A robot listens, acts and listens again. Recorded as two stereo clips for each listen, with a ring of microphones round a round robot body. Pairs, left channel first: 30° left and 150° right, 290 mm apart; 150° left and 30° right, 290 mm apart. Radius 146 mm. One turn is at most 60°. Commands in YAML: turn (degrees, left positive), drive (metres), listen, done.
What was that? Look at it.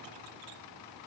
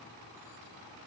listen: true
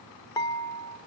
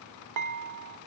turn: -45
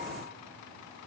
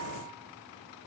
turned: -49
listen: true
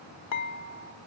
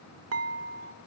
done: "Found it: dishes clattering, straight ahead."